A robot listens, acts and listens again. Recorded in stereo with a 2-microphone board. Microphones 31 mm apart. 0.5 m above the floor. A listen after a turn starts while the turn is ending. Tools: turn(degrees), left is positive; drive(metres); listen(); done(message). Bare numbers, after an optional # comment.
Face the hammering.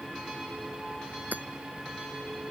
turn(-90)
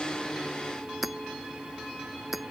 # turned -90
done("Facing the hammering.")